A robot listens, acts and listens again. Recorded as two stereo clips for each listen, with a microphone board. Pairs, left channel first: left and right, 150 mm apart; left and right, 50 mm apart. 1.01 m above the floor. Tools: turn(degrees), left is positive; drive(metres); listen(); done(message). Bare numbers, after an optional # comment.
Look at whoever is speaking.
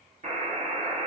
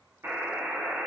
listen()
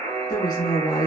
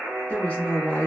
# The woman speaking: about 25° left or 155° left.
turn(25)
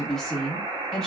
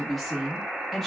done("Facing the woman speaking.")